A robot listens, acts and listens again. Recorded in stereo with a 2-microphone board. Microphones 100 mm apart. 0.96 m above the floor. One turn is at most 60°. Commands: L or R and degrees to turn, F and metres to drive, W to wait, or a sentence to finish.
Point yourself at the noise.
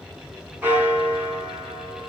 R20
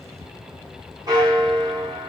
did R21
R60
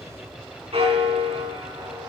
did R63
R60
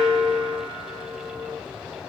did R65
R10
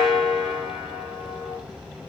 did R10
Facing the bell.